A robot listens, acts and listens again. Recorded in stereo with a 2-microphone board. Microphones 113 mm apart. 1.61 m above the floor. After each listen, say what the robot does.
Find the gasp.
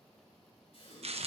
Turn 65° left.
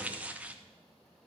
Keep listening.
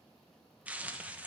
I heard a gasp, but can't make it out now. It was about straight ahead or 50° left.